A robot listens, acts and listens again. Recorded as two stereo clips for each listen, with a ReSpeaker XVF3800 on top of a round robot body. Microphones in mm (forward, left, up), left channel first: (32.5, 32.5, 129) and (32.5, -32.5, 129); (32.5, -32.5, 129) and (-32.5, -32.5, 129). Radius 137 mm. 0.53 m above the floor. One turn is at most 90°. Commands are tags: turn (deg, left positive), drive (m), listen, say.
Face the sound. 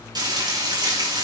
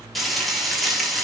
<turn deg="-90"/>
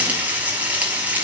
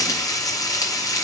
<turn deg="-25"/>
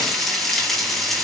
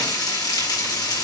<say>Found it: frying, straight ahead.</say>